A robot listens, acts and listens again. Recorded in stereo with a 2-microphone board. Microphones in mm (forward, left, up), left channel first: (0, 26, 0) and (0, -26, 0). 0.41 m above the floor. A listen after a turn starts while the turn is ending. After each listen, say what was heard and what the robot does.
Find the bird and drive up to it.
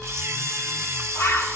The bird: about 75° left or 105° left. Turn 75° left.
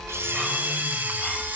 Keep listening.
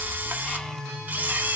Keep listening.
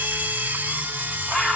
So it is at 25° left. Turn 25° left.
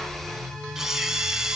Keep listening.
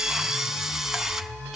Keep listening.
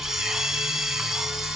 Facing where the bird came from. I can't hear it now. I did not reach it.